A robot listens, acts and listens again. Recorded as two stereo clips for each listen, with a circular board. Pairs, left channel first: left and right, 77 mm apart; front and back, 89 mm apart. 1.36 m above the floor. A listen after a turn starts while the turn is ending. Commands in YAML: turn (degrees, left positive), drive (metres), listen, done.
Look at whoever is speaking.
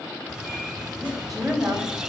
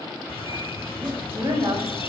turn: 180
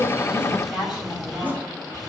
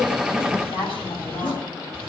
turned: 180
done: "Facing the woman speaking."